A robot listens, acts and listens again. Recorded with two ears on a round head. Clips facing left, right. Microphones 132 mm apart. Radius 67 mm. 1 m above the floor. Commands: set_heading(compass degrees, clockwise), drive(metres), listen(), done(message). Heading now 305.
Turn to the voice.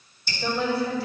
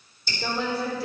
set_heading(340)
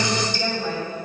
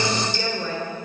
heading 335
set_heading(85)
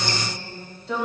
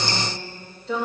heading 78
done("Found it: a woman speaking, straight ahead, 2 to 4 m away.")